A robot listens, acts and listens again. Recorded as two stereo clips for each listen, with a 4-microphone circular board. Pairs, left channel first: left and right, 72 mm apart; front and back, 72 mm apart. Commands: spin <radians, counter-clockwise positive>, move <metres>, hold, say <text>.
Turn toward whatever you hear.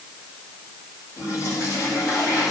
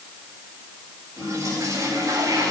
spin 2.27
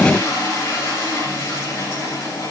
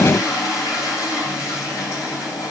spin 0.61
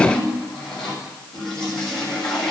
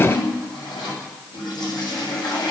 say Found it: a toilet flushing, straight ahead.